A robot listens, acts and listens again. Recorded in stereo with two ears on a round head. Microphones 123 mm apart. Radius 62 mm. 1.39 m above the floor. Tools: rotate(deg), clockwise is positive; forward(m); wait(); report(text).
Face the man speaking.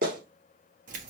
wait()
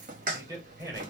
rotate(20)
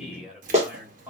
rotate(30)
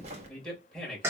report("Found it: a man speaking, straight ahead.")